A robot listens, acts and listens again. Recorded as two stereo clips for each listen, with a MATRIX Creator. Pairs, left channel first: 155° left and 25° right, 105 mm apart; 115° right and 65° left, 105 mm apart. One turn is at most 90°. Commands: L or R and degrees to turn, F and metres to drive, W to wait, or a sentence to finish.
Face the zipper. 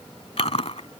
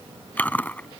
W
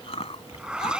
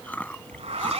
L60
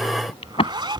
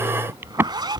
L20
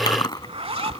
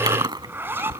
Facing the zipper.